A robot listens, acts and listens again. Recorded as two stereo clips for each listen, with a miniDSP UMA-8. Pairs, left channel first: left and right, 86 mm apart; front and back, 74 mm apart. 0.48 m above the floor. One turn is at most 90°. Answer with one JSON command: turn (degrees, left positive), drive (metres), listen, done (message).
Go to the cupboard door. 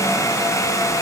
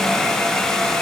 {"listen": true}
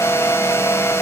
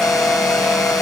{"listen": true}
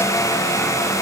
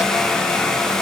{"done": "I can't make out a cupboard door to turn to."}